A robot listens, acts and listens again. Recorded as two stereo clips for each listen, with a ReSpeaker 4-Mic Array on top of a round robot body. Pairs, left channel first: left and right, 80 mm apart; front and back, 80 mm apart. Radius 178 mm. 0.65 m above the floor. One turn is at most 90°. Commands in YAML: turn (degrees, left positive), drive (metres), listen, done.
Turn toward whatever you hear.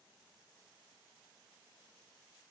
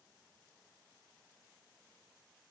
listen: true
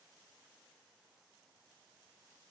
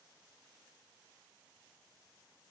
listen: true
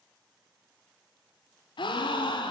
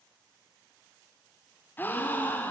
turn: 65
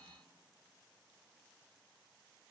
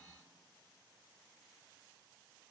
done: "I heard a gasp from this way, but can't make it out now."